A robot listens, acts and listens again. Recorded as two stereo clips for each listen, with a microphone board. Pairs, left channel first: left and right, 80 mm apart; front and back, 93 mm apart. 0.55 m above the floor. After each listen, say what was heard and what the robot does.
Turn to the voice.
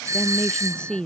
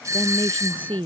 The woman speaking: 170° left. Turn 170° left.
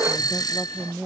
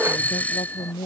Facing the woman speaking.